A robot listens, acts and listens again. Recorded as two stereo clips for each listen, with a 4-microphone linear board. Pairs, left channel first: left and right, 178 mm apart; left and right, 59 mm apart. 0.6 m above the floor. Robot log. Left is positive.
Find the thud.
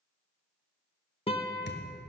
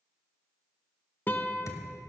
note: The thud: about 70° left or 110° left.
cmd yaw +70
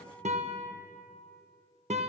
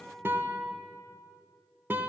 cmd idle
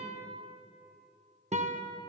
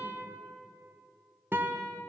end: I heard a thud, but can't make it out now. It was about straight ahead or 40° left.